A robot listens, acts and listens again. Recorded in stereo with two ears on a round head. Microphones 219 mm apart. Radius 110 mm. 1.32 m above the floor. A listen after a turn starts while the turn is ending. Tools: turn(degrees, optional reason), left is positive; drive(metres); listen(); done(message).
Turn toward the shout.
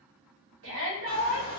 turn(degrees=-60, reason="The shout: about 60° right or 120° right.")
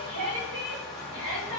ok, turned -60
turn(degrees=-60, reason="So it is at 60° right.")
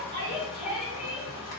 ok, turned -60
done("Facing the shout.")